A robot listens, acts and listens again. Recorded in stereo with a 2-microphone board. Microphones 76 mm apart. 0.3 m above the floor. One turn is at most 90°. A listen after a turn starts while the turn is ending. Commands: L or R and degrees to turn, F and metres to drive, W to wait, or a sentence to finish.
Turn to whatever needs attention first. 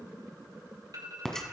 R55
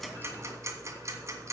W
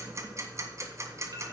W
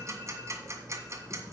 I heard an alarm, but can't make it out now. It was about straight ahead or 70° right.